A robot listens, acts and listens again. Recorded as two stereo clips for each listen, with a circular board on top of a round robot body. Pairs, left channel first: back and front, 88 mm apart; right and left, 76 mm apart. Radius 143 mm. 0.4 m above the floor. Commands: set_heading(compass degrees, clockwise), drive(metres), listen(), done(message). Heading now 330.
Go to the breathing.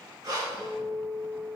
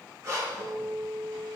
set_heading(290)
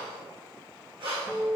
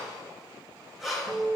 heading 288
drive(1.0)
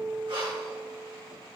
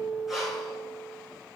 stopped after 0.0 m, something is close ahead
done("Something is in my way. I am facing the breathing but have not reached it.")